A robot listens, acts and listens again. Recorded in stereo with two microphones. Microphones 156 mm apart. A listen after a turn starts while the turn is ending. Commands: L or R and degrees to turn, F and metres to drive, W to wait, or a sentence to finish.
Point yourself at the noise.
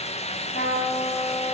L70
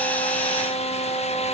L35
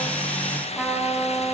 Facing the trumpet, 2 to 4 m away.